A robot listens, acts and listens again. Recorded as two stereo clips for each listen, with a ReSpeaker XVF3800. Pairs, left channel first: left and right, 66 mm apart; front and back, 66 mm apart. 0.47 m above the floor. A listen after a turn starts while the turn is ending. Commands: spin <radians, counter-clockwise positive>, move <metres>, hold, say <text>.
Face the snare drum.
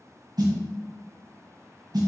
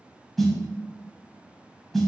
spin -1.48
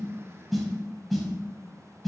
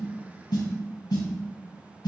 say Facing the snare drum, 1 to 2 m away.